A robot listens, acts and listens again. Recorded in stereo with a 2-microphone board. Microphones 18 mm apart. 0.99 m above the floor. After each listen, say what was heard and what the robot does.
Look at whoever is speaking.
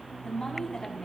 The woman speaking: about 45° left or 135° left. Turn 45° left.
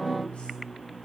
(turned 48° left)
Keep listening.
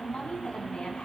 So it is at 80° left. Turn 80° left.
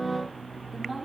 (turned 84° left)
Keep listening.
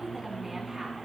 Keep listening.
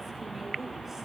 I heard a woman speaking from this way, but can't make it out now.